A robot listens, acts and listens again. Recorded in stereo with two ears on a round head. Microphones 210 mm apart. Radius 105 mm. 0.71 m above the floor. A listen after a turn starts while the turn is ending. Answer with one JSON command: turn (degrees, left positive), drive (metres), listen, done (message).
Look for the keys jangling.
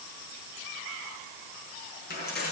{"turn": 40}
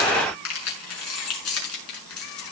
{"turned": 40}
{"turn": 110}
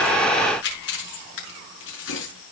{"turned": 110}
{"turn": 55}
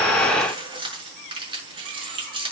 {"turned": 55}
{"turn": -25}
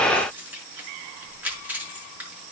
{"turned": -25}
{"turn": -10}
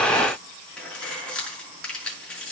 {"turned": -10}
{"done": "Facing the keys jangling."}